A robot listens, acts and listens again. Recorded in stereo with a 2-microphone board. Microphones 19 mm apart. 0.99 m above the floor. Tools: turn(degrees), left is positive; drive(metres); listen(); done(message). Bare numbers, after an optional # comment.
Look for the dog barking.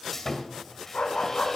# The dog barking: about 65° left or 115° left.
turn(65)
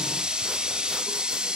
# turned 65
listen()
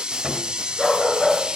# So it is at 20° left.
turn(20)
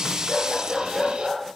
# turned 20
done("Facing the dog barking, over 4 m away.")